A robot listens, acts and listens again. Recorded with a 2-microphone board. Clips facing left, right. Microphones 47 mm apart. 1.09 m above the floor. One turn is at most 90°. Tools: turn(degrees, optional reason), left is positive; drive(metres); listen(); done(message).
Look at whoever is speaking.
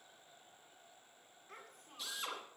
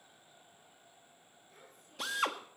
turn(degrees=60, reason="The child speaking: about 60° left or 120° left.")
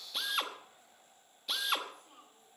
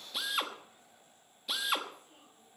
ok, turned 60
turn(degrees=55, reason="So it is at 55° left.")
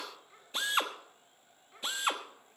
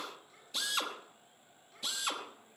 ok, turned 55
turn(degrees=25, reason="The child speaking is now 25° left.")
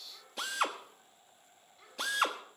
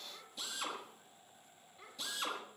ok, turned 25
turn(degrees=-15, reason="The child speaking is now 15° right.")
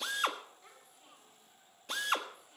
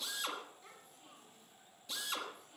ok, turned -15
done("Found it: a child speaking, straight ahead.")